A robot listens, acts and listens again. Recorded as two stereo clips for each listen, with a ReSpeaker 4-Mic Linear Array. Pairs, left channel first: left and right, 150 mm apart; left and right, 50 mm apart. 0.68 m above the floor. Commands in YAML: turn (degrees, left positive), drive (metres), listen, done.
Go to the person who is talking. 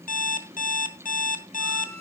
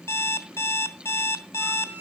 listen: true
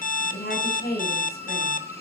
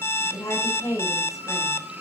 turn: 90
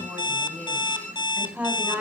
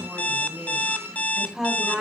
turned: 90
turn: -10
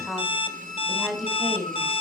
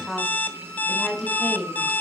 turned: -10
drive: 1.0
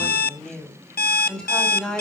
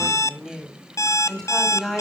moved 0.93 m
drive: 1.0
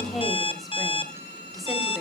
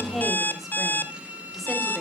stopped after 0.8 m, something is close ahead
listen: true
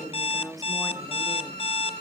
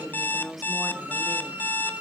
done: "Blocked. The woman speaking is further on, straight ahead."